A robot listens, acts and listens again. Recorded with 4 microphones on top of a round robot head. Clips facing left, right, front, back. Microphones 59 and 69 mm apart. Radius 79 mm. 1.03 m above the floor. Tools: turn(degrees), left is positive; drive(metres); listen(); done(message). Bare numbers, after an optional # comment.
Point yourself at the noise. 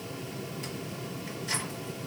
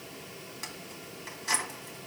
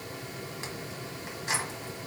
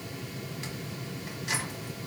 # The keys jangling: 60° right.
turn(-60)
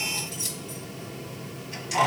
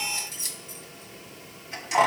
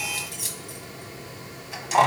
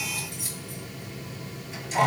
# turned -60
# The keys jangling is now 25° right.
turn(-25)
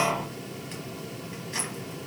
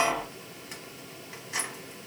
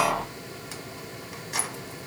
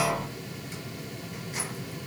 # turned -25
done("Facing the keys jangling, 1 to 2 m away.")